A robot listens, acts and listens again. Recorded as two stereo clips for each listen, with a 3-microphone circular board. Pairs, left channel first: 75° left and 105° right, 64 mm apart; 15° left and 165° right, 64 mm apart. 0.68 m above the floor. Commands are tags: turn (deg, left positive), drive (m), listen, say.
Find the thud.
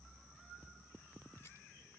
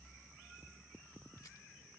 <listen/>
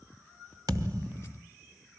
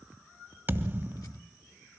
<turn deg="-110"/>
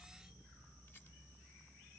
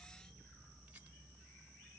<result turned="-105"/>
<say>Facing where the thud came from. I can't hear it now.</say>